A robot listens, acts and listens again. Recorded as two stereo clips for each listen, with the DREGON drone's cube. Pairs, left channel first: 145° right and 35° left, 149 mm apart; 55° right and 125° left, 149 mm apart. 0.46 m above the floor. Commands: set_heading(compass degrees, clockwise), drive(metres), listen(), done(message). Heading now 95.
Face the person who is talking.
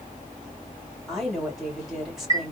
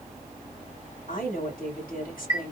set_heading(150)
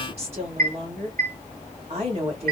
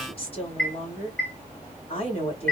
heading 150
set_heading(160)
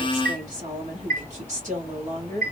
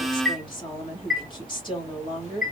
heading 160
done("Found it: a woman speaking, straight ahead, 2 to 4 m away.")